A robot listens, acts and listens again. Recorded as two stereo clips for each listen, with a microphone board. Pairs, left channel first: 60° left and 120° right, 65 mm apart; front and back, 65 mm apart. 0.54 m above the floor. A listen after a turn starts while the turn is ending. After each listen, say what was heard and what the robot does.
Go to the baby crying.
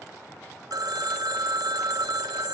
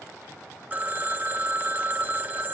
Keep listening.
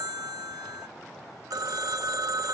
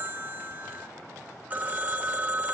Keep listening.
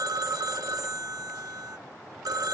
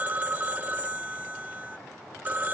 I can't make out a baby crying to turn to.